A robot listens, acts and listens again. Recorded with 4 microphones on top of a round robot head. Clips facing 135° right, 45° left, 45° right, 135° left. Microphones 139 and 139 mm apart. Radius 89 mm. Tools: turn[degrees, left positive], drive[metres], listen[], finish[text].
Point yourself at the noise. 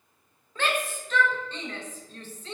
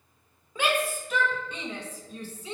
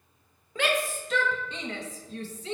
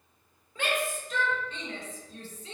Thought: The shout: 35° right.
Action: turn[-35]
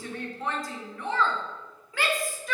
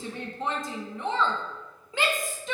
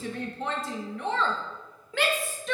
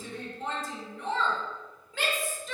Thought: The shout is now 25° right.
Action: turn[-25]
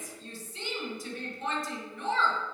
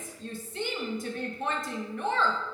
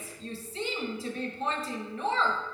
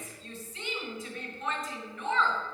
Thought: The shout is now 10° left.
Action: turn[10]
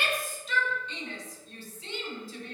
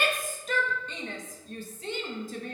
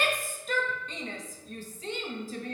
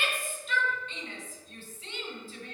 Action: finish[Found it: a shout, straight ahead, 1 to 2 m away.]